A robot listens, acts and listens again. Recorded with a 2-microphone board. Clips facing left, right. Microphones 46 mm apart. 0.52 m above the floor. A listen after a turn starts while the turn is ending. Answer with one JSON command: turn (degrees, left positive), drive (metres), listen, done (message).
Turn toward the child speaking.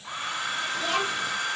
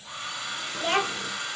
{"turn": -40}
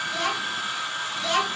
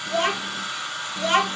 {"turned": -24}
{"turn": -35}
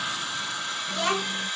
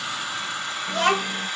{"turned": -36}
{"turn": -130}
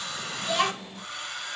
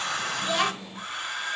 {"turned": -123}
{"turn": -10}
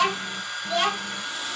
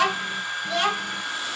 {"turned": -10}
{"done": "Facing the child speaking."}